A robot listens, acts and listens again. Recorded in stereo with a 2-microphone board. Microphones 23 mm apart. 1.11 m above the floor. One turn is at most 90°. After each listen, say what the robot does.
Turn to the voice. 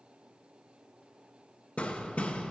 Keep listening.
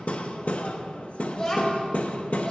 Turn 35° left.
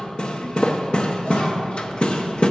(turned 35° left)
Keep listening.
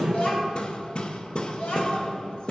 Turn 90° left.
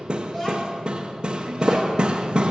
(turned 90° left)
Turn 15° left.
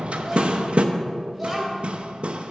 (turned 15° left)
Facing the child speaking.